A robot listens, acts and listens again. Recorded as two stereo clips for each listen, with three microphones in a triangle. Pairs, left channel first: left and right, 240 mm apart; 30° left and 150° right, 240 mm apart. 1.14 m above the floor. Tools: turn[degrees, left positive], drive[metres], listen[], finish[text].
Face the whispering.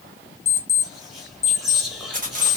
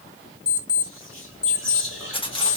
Action: finish[Facing the whispering.]